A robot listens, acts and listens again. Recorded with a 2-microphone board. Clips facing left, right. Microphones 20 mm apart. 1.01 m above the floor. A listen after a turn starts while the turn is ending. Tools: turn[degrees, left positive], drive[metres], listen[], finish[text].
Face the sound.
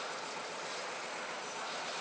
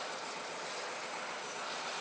Action: listen[]
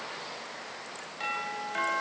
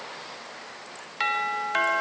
Thought: The doorbell: about 40° right or 140° right.
Action: turn[-40]
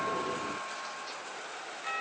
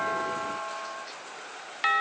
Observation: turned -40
Thought: So it is at 95° right.
Action: turn[-95]
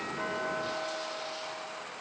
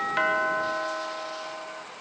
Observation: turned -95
Thought: The doorbell is now 40° right.
Action: turn[-40]
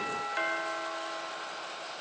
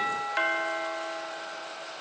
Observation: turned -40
Thought: The doorbell is now 20° right.
Action: turn[-20]
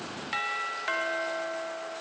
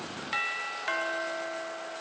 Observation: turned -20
Action: finish[Found it: a doorbell, straight ahead.]